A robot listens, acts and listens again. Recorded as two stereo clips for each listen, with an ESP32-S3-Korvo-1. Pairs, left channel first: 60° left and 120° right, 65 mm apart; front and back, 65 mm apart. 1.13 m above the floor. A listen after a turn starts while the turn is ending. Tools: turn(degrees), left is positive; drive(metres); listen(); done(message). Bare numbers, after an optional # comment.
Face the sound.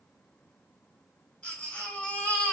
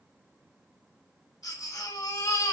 # The baby crying: 10° right.
turn(-10)
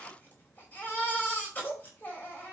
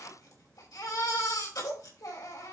done("Found it: a baby crying, straight ahead, over 4 m away.")